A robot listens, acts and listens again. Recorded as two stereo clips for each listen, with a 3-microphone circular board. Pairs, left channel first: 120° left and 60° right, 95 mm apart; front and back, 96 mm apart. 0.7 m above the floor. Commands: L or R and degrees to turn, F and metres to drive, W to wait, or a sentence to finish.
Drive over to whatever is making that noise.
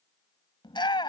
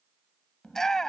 L85
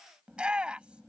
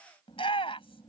L20
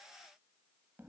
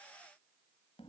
W
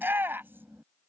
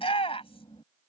F1.0
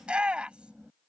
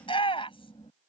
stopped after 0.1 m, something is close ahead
L20
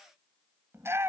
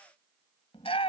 Something is in my way. I am facing the shout but have not reached it.